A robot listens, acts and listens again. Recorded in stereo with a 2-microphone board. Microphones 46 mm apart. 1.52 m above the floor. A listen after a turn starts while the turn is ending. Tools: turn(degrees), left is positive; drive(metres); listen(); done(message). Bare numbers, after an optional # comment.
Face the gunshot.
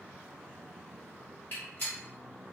# The gunshot: about 45° left or 135° left.
turn(45)
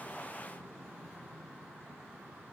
listen()
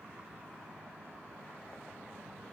done("I heard a gunshot, but can't make it out now. It was about straight ahead or 90° left.")